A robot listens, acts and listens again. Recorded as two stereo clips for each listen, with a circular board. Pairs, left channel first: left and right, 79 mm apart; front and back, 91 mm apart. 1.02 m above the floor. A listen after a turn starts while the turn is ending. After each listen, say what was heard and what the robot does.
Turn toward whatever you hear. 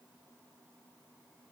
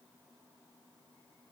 Keep listening.
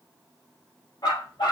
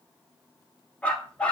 The dog barking: 75° left. Turn 75° left.
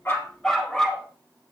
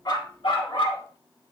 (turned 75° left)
Found it: a dog barking, straight ahead.